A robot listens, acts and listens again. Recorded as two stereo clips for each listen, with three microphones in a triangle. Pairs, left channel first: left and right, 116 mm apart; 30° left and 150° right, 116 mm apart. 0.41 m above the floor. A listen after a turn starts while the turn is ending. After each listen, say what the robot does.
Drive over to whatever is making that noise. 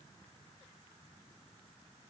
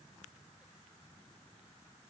Keep listening.
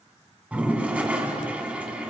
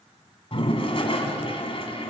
Turn 10° right.
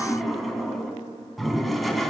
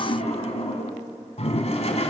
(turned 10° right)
Drive 1.0 m forward.
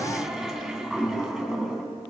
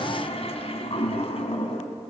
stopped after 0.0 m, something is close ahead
Blocked. The toilet flushing is further on, straight ahead.